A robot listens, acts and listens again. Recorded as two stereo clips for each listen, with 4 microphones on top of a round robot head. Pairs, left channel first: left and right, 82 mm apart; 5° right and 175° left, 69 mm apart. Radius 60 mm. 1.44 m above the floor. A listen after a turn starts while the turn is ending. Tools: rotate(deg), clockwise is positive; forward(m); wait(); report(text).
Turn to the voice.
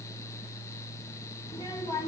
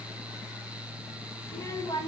rotate(-30)
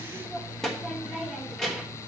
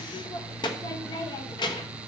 report("Facing the child speaking.")